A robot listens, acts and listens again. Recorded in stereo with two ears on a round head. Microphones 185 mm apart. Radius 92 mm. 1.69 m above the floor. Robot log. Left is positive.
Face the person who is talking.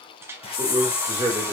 cmd yaw -30
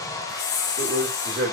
note: So it is at 135° right.
cmd yaw -135
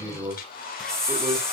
note: The man speaking is now 15° right.
cmd yaw -15
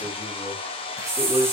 end: Found it: a man speaking, straight ahead.